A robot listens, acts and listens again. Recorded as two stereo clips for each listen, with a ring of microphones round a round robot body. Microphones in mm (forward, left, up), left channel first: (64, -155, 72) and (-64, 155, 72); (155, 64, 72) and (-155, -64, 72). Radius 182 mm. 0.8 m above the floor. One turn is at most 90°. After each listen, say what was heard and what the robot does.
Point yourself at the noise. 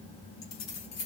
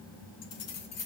The keys jangling: 25° right. Turn 25° right.
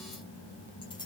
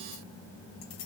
Keep listening.
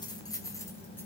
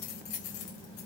The keys jangling is now 15° left. Turn 15° left.
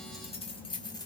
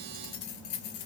The keys jangling is now 10° left. Turn 10° left.
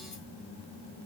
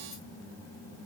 Keep listening.
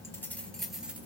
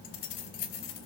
The keys jangling is now 25° left. Turn 25° left.
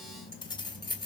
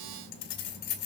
The keys jangling is now 10° left. Turn 10° left.
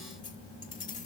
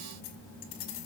Found it: keys jangling, straight ahead.